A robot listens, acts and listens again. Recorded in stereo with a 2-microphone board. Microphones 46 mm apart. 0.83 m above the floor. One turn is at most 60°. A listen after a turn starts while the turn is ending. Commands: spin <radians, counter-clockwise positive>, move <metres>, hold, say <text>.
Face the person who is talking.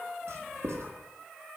hold
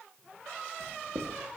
hold
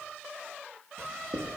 say I can't make out anyone speaking, only writing.